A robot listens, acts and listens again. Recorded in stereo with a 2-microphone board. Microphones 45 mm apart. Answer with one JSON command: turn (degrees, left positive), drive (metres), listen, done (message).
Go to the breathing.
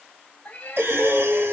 {"turn": -60}
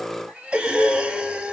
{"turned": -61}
{"turn": -25}
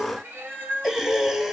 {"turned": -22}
{"drive": 1.0}
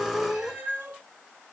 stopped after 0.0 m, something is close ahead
{"done": "Blocked. The breathing is further on, straight ahead."}